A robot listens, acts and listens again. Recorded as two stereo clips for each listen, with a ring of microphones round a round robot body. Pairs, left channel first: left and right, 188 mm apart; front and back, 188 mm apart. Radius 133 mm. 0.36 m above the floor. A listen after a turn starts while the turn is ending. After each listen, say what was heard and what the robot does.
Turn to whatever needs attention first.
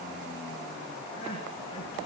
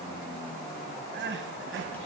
The crying: 160° left. Turn 160° left.
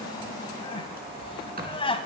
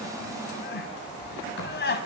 The crying is now 30° left. Turn 30° left.
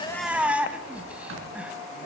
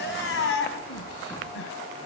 Facing the crying.